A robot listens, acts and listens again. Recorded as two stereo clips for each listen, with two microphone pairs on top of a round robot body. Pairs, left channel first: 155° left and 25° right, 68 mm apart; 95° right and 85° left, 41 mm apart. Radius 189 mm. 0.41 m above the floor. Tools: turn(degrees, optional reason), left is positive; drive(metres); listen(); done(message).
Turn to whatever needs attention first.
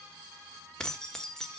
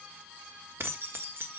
listen()
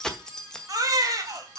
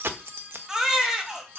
turn(degrees=15, reason="The baby crying: 15° left.")
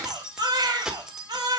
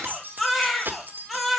done("Found it: a baby crying, straight ahead, 2 to 4 m away.")